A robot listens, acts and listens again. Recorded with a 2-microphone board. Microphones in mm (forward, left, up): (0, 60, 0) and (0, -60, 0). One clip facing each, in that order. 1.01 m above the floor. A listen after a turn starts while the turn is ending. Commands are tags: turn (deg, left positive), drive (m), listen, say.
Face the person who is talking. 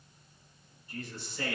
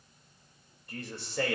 <turn deg="-75"/>
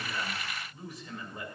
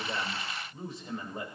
<turn deg="-30"/>
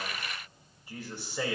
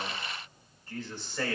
<turn deg="10"/>
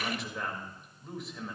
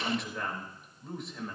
<say>Facing the man speaking, 2 to 4 m away.</say>